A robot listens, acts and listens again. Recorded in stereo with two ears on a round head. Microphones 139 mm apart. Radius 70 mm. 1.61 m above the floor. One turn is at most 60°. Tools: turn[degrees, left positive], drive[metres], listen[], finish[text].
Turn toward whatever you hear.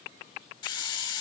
Thought: The hiss: about 30° left or 150° left.
Action: turn[30]
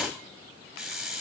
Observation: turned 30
Action: finish[Facing the hiss, over 4 m away.]